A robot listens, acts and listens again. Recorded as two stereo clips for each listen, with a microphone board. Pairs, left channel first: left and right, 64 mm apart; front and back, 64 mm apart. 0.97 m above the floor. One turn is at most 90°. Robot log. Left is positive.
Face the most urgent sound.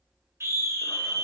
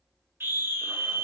note: The scream: 130° right.
cmd yaw -90
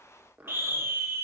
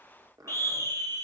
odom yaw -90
note: The scream is now 40° right.
cmd yaw -40
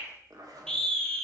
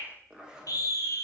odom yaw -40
note: The scream is now 15° left.
cmd yaw +15
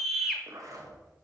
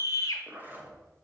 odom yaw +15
end: Found it: a scream, straight ahead.